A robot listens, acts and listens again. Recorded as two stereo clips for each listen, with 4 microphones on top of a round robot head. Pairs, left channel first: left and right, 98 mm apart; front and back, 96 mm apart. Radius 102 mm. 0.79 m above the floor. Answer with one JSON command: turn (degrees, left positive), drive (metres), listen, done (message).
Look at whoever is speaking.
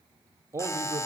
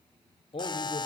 {"turn": -30}
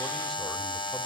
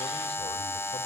{"listen": true}
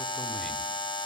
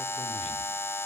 {"listen": true}
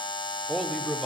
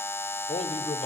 {"done": "Found it: a man speaking, straight ahead."}